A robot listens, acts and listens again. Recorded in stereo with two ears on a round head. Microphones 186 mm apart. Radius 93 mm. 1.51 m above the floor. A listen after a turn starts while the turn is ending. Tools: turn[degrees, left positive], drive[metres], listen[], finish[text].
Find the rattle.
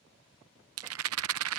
Action: turn[-90]
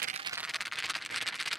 Action: finish[Facing the rattle.]